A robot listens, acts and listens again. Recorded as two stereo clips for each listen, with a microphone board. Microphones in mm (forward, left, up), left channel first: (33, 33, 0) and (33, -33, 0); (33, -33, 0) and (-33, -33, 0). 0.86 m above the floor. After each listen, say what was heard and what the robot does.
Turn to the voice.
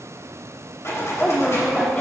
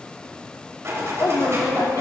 The woman speaking: 15° left. Turn 15° left.
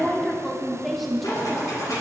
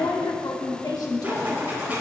Found it: a woman speaking, straight ahead.